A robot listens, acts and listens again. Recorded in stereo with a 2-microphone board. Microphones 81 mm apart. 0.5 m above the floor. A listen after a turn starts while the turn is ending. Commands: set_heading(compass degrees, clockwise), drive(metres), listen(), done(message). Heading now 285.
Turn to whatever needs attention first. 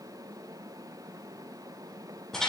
listen()
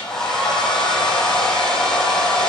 listen()
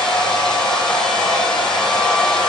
done("I can't make out anything urgent, only a hair dryer.")